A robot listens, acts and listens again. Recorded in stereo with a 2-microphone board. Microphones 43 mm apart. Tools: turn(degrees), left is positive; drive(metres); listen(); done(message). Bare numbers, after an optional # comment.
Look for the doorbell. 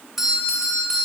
turn(-30)
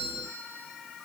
# So it is at 20° left.
turn(20)
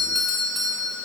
done("Found it: a doorbell, straight ahead, over 4 m away.")